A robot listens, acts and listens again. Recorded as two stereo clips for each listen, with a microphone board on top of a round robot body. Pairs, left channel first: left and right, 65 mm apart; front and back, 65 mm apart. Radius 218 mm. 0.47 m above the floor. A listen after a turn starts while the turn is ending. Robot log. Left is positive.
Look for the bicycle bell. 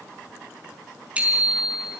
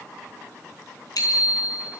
note: The bicycle bell: 20° right.
cmd yaw -20
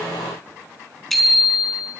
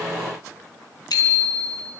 end: Found it: a bicycle bell, straight ahead, over 4 m away.